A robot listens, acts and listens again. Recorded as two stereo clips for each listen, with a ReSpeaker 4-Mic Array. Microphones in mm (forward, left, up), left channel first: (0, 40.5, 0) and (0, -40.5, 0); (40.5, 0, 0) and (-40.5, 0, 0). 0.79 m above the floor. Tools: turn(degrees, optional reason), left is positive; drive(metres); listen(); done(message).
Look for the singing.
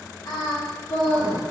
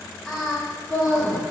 turn(degrees=75, reason="The singing: 75° left.")
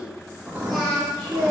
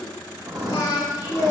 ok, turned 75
done("Facing the singing.")